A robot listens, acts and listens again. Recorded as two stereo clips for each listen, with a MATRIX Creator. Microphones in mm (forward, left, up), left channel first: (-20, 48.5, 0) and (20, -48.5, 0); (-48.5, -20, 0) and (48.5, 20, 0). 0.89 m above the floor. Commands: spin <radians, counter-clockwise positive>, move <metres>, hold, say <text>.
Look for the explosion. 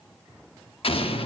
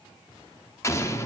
spin 2.44
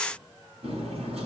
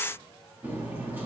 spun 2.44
say I heard an explosion from this way, but can't make it out now.